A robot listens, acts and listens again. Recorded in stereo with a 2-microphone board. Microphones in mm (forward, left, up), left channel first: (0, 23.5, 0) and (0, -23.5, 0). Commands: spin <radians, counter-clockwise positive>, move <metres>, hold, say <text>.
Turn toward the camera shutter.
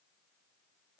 hold
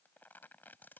hold
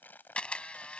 spin 0.44
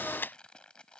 spin 2.27
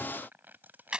spin -0.35
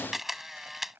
say Found it: a camera shutter, straight ahead.